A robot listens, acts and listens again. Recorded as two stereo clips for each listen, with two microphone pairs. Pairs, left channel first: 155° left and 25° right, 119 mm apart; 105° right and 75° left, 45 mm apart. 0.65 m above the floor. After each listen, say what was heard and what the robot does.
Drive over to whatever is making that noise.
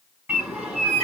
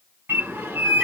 The bird: 50° left. Turn 50° left.
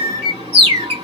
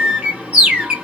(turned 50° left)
Drive 1.0 m forward.
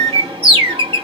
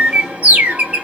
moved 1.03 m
The bird is now 15° left. Turn 15° left.
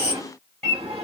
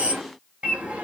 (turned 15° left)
Drive 1.0 m forward.
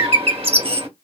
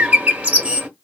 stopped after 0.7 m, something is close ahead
The bird is now 10° left. Turn 10° left.
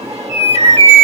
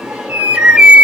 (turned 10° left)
I am next to the bird.